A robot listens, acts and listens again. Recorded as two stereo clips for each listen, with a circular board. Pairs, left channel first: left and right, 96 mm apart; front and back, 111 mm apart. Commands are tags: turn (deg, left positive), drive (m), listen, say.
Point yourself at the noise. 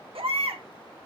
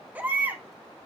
<turn deg="-105"/>
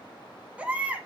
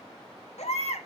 <turn deg="-15"/>
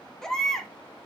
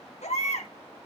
<say>Facing the baby crying, 2 to 4 m away.</say>